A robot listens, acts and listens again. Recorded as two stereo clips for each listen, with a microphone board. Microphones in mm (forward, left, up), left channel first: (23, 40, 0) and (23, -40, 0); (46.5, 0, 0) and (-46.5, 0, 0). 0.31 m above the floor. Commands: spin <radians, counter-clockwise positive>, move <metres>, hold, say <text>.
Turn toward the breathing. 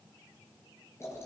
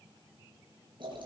hold
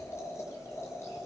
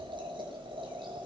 hold
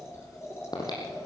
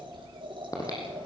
spin 0.96
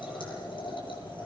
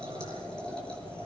hold
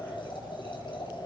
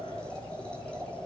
hold
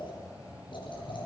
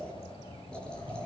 spin -0.26
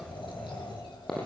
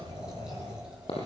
say Found it: breathing, straight ahead, over 4 m away.